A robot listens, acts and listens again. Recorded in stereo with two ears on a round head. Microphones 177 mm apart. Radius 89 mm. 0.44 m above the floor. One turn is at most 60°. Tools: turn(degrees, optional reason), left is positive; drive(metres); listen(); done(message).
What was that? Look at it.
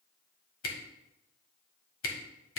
turn(degrees=60, reason="The camera shutter: about 75° left or 105° left.")
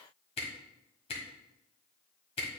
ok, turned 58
turn(degrees=30, reason="So it is at 30° left.")
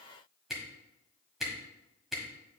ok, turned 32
done("Found it: a camera shutter, straight ahead, 1 to 2 m away.")